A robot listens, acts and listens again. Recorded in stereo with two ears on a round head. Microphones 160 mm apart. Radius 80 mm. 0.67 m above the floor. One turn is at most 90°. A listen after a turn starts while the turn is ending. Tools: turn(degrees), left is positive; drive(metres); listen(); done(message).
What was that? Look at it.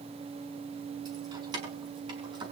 turn(degrees=-25)
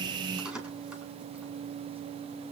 done("Found it: keys jangling, straight ahead, over 4 m away.")